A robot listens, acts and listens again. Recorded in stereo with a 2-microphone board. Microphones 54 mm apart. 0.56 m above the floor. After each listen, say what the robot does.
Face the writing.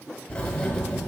Turn 20° left.
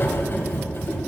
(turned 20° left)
Turn 135° left.
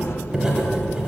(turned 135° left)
Turn 15° right.
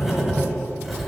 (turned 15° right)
Facing the writing.